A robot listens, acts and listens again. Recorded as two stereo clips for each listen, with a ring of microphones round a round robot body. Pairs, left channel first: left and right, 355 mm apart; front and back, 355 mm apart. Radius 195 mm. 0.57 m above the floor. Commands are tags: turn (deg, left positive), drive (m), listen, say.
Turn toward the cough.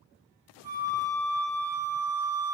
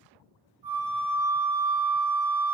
<listen/>
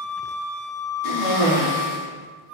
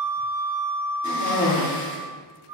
<turn deg="65"/>
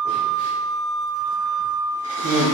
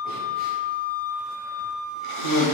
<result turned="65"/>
<turn deg="10"/>
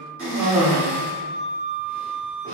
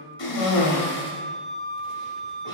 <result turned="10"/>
<say>Facing the cough, 1 to 2 m away.</say>